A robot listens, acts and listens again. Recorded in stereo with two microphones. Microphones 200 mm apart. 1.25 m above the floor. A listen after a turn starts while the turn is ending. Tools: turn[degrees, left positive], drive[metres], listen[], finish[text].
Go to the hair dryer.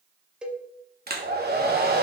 Thought: The hair dryer: about 50° right or 130° right.
Action: turn[-50]
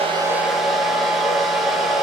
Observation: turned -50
Action: drive[1.0]
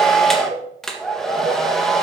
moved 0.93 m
Action: drive[1.0]
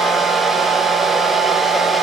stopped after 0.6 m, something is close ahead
Action: finish[I am next to the hair dryer.]